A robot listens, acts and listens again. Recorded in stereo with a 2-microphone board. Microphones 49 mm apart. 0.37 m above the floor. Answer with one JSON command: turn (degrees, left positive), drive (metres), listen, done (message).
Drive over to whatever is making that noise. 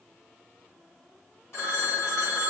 {"turn": 60}
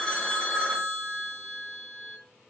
{"turn": 10}
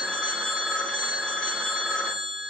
{"drive": 1.0}
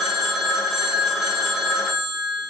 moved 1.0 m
{"drive": 1.0}
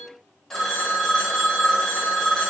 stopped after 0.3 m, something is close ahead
{"turn": 10}
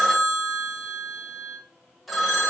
{"done": "I am next to the phone ringing."}